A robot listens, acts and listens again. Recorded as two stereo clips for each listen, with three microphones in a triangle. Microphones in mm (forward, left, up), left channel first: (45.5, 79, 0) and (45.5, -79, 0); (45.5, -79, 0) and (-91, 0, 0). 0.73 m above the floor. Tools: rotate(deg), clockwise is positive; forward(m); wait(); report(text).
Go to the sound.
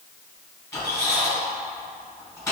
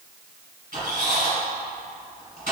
rotate(-160)
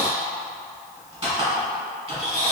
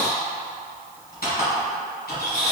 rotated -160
rotate(40)
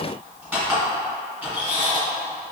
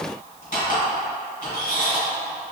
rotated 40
rotate(10)
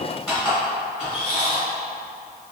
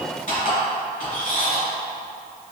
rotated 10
forward(1.0)
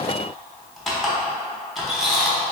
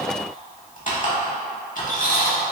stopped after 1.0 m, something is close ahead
report("Arrived at the squeak, straight ahead.")